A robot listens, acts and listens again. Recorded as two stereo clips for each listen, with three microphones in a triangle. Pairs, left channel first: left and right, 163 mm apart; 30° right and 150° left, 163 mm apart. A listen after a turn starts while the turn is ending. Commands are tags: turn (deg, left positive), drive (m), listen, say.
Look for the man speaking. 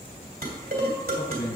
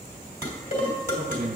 <turn deg="120"/>
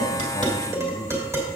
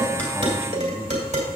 <listen/>
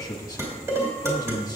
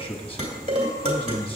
<turn deg="25"/>
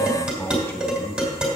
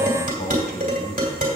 <turn deg="15"/>
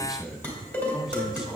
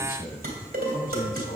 <say>Found it: a man speaking, straight ahead.</say>